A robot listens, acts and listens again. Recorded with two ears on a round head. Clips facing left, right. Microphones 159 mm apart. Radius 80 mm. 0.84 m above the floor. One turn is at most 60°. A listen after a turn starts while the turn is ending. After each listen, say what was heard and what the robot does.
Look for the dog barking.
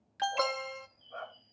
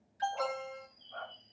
The dog barking: about 50° left or 130° left. Turn 50° left.
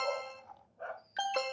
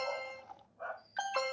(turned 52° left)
So it is at 25° left. Turn 25° left.
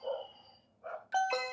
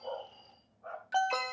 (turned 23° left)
The dog barking is now 40° left. Turn 40° left.
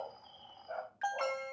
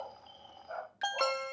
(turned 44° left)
The dog barking is now 15° left. Turn 15° left.
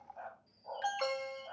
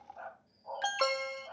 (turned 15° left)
The dog barking is now 15° left. Turn 15° left.
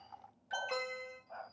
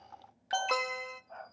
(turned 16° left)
Facing the dog barking, 2 to 4 m away.